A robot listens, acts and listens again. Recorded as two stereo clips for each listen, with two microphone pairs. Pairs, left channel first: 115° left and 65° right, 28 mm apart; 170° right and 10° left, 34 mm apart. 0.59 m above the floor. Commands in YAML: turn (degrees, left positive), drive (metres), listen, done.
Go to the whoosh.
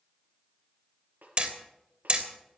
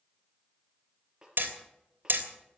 listen: true
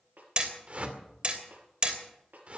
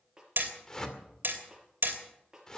turn: -95
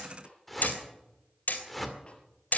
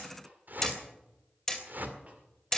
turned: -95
turn: 30
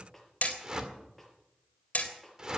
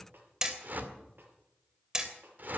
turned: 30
drive: 1.0
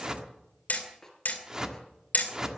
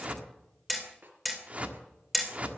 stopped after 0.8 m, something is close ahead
done: "Arrived at the whoosh, straight ahead."